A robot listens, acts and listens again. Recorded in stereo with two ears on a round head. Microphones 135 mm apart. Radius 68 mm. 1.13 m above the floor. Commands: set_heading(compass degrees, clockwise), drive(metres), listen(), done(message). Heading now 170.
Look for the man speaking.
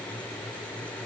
listen()
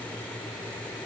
listen()
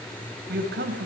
set_heading(240)
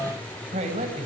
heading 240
set_heading(280)
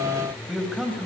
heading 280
done("Facing the man speaking.")